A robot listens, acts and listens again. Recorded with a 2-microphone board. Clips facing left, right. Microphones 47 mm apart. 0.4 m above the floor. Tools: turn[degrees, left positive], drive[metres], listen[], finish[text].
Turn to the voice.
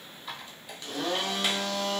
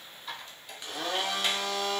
Action: listen[]
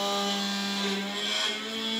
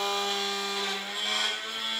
Action: listen[]
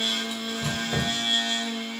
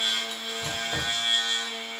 Action: finish[I can't make out anyone speaking, only a blender and a squeak.]